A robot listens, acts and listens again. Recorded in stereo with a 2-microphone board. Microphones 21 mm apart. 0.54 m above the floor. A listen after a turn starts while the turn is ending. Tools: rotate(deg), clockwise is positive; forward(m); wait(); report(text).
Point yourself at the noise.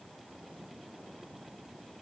wait()
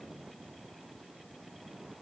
wait()
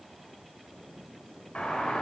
rotate(-60)
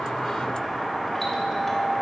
rotate(-10)
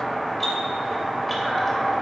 report("Facing the doorbell, 2 to 4 m away.")